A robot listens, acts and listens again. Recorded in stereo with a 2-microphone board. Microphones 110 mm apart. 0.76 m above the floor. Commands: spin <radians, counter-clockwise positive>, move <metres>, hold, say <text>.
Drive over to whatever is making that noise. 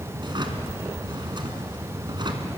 spin -0.79
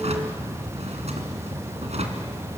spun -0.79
spin -1.57
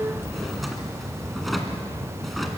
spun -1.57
move 1.0
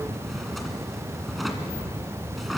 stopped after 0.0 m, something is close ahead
say Blocked. The drawer is further on, straight ahead.